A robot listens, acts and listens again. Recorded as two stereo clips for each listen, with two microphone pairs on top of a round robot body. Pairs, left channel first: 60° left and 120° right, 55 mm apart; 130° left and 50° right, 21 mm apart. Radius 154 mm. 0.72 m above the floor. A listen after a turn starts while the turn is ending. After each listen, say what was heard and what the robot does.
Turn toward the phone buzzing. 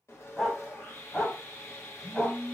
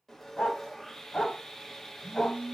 Found it: a phone buzzing, straight ahead.